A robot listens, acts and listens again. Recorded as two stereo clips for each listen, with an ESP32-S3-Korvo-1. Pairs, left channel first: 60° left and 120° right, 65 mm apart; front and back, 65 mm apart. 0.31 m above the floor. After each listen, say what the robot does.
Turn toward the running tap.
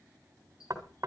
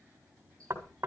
Turn 70° left.
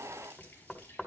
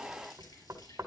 Keep listening.
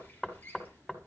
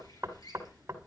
Found it: a running tap, straight ahead, over 4 m away.